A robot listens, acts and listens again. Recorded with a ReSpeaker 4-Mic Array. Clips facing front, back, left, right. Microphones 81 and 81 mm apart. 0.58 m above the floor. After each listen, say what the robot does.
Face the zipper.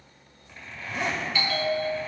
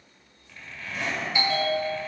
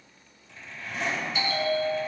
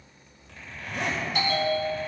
Turn 70° right.
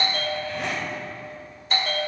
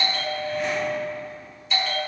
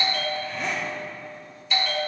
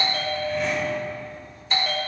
Keep listening.
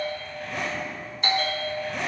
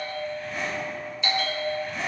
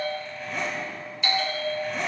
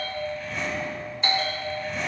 Facing the zipper.